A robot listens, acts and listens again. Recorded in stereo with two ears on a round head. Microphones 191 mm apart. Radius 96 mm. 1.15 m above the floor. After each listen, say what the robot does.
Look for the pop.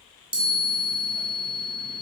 Keep listening.
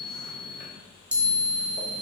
Keep listening.
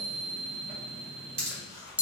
Turn 30° right.
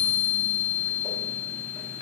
Keep listening.
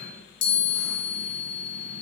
I heard a pop, but can't make it out now. It was about straight ahead or 120° right.